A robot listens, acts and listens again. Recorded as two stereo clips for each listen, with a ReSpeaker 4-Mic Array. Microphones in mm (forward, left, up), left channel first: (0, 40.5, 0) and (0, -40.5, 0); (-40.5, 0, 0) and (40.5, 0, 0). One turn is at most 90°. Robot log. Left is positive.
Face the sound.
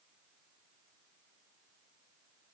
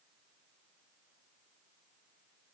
cmd idle
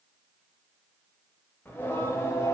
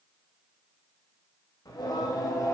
note: The singing: 140° left.
cmd yaw +90
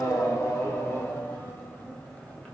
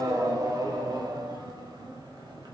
note: The singing is now 15° left.
cmd yaw +15
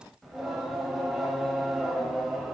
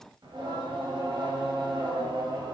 end: Facing the singing, 1 to 2 m away.